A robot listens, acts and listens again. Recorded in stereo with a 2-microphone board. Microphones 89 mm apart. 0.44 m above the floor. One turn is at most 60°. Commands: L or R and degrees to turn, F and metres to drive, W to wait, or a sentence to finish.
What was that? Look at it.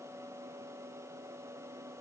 W
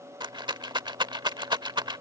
R55
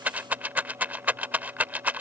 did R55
R20
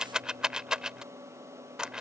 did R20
R10
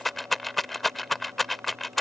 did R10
Facing the rattle.